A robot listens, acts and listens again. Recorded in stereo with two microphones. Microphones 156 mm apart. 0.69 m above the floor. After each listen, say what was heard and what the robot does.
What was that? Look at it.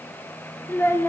The child speaking: about 15° left or 165° left. Turn 15° left.
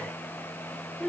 Found it: a child speaking, straight ahead, under 1 m away.